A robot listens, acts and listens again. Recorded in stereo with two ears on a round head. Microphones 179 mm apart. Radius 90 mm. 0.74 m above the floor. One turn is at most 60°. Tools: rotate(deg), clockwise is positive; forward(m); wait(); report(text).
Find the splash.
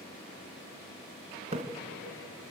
rotate(30)
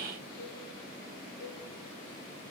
wait()
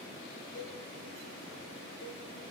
report("I heard a splash, but can't make it out now. It was about straight ahead or 120° right.")